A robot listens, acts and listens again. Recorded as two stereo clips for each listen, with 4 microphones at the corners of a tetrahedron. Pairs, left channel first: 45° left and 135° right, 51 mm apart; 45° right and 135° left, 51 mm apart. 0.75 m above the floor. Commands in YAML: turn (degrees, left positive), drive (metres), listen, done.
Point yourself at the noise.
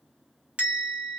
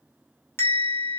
turn: -75
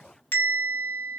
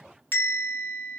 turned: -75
done: "Facing the bell, under 1 m away."